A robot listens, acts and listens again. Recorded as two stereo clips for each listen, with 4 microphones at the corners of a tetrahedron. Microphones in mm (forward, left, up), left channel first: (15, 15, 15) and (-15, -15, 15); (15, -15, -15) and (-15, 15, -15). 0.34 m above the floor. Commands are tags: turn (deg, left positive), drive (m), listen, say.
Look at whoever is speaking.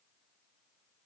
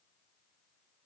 <listen/>
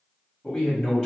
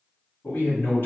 <turn deg="-35"/>
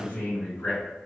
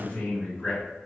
<turn deg="10"/>
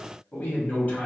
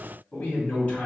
<say>Found it: a man speaking, straight ahead, 1 to 2 m away.</say>